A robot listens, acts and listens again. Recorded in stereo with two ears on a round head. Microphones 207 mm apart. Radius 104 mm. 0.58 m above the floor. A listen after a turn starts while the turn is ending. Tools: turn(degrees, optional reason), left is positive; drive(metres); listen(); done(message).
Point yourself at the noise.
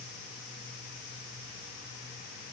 listen()
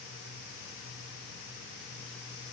listen()
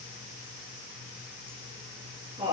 turn(degrees=-25, reason="The laughter: about 25° right or 155° right.")
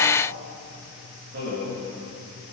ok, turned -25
turn(degrees=-130, reason="So it is at 130° right.")
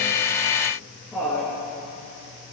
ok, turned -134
done("Facing the laughter.")